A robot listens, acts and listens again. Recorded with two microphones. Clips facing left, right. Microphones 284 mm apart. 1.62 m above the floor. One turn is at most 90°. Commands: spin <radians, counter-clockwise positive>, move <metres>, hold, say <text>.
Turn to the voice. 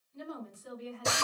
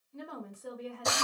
spin -1.13
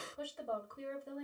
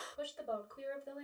say Facing the woman speaking, 1 to 2 m away.